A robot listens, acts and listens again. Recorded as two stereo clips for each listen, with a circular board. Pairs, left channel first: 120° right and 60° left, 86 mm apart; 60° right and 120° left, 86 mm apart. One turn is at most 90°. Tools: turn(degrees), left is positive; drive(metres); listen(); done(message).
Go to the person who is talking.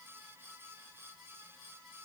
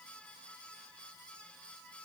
listen()
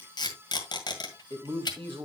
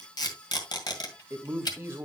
turn(degrees=60)
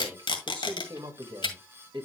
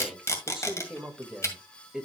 turn(degrees=40)
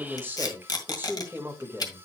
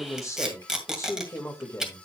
drive(metres=1.0)
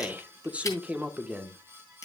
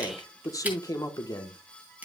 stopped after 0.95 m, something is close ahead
turn(degrees=-15)
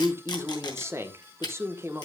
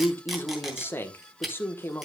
done("Arrived at the man speaking, straight ahead.")